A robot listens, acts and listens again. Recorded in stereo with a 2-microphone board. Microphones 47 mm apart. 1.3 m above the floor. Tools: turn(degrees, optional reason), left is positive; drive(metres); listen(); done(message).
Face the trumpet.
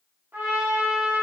turn(degrees=-45, reason="The trumpet: about 45° right or 135° right.")
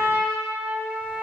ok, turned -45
turn(degrees=-90, reason="So it is at 90° right.")
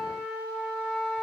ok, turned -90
done("Found it: a trumpet, straight ahead.")